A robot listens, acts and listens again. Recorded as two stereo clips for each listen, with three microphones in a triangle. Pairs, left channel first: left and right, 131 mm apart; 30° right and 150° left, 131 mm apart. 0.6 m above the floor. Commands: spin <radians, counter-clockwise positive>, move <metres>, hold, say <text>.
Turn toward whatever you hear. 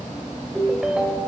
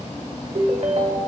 spin -3.05
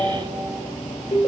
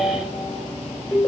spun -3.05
spin 0.79
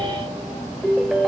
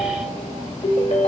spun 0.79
say Facing the ringtone, 1 to 2 m away.